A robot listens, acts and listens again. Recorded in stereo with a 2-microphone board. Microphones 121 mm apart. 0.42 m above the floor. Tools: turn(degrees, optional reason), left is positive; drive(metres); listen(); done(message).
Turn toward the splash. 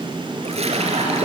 turn(degrees=-60, reason="The splash: about 60° right or 120° right.")
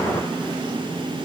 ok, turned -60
listen()
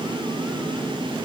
done("I heard a splash, but can't make it out now. It was about straight ahead or 60° right.")